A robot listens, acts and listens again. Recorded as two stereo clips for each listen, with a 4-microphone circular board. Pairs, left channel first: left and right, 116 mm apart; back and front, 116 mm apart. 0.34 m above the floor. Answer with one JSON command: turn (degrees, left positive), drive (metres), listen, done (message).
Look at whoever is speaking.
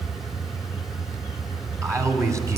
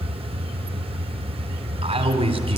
{"turn": -30}
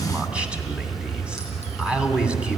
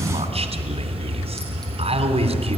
{"turn": -10}
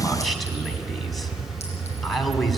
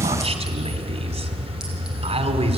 {"done": "Found it: a man speaking, straight ahead, 2 to 4 m away."}